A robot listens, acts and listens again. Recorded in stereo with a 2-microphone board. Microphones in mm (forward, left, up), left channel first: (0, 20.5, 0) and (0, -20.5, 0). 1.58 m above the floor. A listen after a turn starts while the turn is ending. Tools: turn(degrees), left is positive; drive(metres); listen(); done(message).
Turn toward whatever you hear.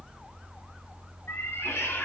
turn(degrees=90)
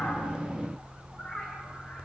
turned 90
listen()
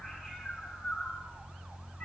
listen()
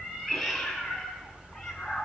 done("Facing the cat meowing.")